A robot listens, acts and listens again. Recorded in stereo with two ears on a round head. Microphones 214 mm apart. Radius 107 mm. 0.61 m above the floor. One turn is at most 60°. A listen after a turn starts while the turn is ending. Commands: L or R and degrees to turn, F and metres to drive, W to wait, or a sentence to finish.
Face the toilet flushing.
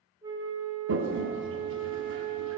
R55
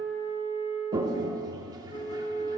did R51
R20
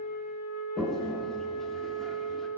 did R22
Found it: a toilet flushing, straight ahead, under 1 m away.